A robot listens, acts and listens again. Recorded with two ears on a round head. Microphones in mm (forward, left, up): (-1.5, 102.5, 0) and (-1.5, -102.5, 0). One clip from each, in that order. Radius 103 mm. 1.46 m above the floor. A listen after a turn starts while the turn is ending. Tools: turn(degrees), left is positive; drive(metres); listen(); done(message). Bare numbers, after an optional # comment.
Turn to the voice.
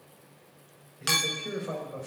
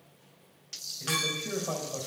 # The man speaking: about 15° right or 165° right.
turn(-15)
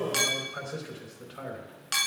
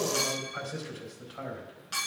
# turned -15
done("Found it: a man speaking, straight ahead, over 4 m away.")